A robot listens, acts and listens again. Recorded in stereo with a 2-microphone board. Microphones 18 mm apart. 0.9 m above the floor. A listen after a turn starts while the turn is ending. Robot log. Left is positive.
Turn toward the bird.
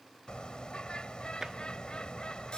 note: The bird: about 65° left or 115° left.
cmd yaw +65
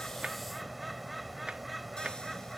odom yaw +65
end: Facing the bird.